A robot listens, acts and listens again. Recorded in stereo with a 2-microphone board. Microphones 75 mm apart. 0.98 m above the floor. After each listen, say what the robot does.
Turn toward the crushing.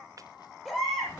Keep listening.
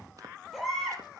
Keep listening.
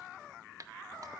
I can't make out crushing, only a baby crying.